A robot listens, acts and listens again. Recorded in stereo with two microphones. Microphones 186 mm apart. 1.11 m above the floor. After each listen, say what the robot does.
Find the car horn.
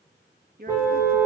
Turn 30° right.
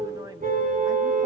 Turn 135° right.
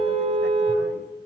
Turn 35° right.
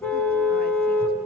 Turn 10° left.
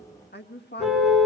Facing the car horn, over 4 m away.